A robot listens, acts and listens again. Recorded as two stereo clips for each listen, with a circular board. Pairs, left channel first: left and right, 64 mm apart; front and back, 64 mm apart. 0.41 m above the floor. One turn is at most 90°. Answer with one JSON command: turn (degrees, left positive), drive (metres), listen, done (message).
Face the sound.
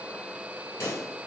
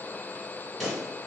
{"turn": 90}
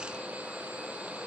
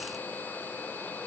{"done": "Facing where the pop came from. I can't hear it now."}